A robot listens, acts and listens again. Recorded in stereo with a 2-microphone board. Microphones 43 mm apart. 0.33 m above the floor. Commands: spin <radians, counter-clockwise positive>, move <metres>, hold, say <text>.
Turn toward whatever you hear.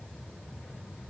hold
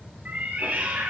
spin -0.79
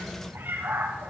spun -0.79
spin -1.66
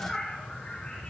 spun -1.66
spin 0.35
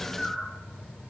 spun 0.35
say Found it: a cat meowing, straight ahead, over 4 m away.